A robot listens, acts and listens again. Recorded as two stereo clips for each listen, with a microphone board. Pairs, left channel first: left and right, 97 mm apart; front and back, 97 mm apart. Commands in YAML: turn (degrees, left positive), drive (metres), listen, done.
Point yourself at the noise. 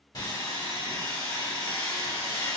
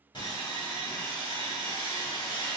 turn: 40
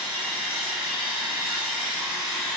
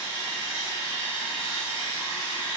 done: "Facing the sawing."